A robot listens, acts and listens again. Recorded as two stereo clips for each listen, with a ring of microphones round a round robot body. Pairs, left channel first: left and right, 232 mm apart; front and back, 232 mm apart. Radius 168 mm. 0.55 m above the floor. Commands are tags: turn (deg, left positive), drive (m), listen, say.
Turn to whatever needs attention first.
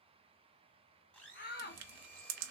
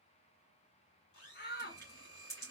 <turn deg="45"/>
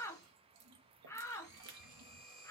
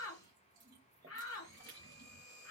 <turn deg="15"/>
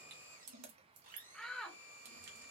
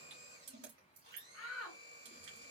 <say>Found it: a shout, straight ahead.</say>